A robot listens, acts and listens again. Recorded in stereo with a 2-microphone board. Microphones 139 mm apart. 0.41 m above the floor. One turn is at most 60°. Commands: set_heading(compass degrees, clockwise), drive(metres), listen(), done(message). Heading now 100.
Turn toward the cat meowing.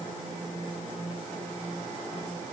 listen()
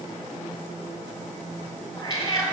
set_heading(70)
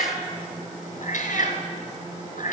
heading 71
set_heading(11)
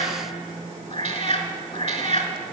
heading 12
set_heading(327)
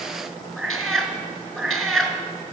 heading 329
done("Facing the cat meowing.")